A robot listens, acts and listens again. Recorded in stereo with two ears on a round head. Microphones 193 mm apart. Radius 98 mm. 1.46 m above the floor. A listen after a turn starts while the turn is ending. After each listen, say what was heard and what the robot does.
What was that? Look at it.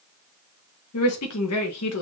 Turn 90° left.
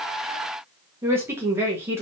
So it is at 10° right. Turn 10° right.
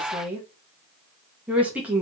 Found it: a woman speaking, straight ahead.